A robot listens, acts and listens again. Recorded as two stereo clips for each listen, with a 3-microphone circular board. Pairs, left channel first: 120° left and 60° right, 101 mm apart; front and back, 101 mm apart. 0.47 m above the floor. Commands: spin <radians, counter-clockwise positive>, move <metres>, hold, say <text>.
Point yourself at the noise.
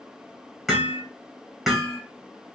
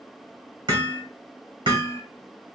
spin -2.53
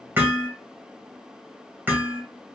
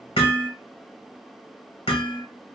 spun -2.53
spin 0.17
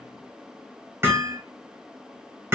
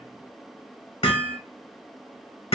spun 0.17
say Facing the hammering.